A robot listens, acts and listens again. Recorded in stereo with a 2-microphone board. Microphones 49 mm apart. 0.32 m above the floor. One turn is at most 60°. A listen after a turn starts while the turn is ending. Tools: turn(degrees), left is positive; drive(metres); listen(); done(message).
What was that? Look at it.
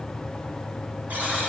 turn(degrees=-40)
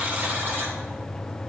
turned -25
turn(degrees=-60)
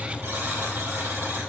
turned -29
turn(degrees=-60)
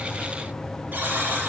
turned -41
turn(degrees=-45)
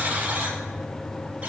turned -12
turn(degrees=-30)
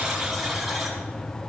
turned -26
done("Facing the buzzer, 2 to 4 m away.")